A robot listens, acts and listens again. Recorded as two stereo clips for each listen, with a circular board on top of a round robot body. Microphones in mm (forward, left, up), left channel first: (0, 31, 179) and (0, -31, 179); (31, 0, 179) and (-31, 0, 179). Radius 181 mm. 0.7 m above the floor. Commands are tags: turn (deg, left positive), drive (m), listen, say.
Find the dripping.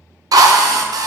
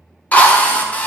<listen/>
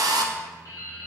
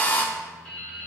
<turn deg="70"/>
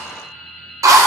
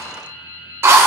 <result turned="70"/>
<turn deg="10"/>
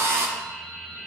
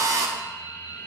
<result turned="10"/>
<say>Facing the dripping.</say>